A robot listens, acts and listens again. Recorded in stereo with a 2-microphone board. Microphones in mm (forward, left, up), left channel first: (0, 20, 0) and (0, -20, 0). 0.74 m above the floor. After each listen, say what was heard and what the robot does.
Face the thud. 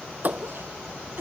The thud: about 45° right or 135° right. Turn 45° right.
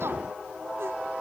Keep listening.
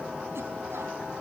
I heard a thud, but can't make it out now. It was about straight ahead or 90° right.